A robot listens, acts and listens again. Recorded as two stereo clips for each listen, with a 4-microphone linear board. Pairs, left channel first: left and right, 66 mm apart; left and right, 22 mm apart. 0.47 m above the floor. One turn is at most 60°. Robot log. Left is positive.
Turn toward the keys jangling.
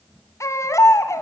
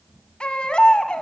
cmd idle
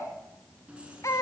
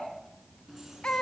cmd yaw -30
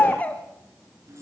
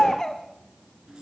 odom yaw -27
note: So it is at 140° right.
cmd yaw -60
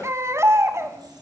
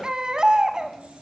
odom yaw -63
note: The keys jangling is now 75° right.
cmd yaw -60
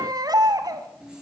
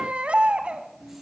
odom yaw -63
note: The keys jangling is now 15° right.
cmd yaw -15
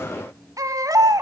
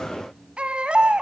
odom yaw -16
end: Found it: keys jangling, straight ahead, over 4 m away.